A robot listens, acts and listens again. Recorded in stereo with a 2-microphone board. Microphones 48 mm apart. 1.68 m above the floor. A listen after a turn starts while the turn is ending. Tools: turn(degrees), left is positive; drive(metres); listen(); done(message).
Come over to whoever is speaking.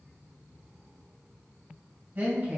turn(degrees=-40)
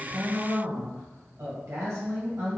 turn(degrees=-100)
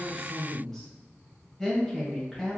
turn(degrees=10)
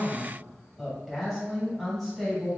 drive(metres=1.0)
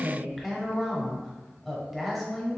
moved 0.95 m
drive(metres=1.0)
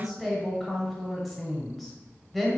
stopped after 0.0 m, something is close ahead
done("Arrived at the woman speaking, straight ahead.")